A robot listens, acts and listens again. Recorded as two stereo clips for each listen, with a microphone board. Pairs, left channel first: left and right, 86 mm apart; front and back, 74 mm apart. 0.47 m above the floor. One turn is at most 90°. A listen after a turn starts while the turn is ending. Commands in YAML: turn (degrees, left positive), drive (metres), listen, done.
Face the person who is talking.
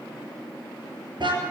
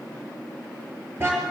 listen: true
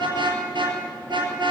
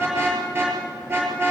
listen: true
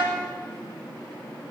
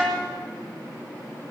done: "I can't make out anyone speaking, only a car horn."